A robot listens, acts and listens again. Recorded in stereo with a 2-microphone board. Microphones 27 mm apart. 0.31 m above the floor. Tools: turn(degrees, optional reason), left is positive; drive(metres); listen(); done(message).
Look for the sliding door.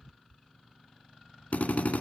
listen()
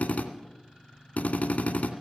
listen()
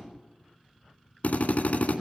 done("I can't make out a sliding door, only a drill.")